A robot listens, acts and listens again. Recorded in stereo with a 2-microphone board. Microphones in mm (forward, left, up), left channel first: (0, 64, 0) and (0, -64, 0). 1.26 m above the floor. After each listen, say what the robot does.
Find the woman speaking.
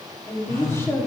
Turn 20° left.
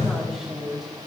Facing the woman speaking, 2 to 4 m away.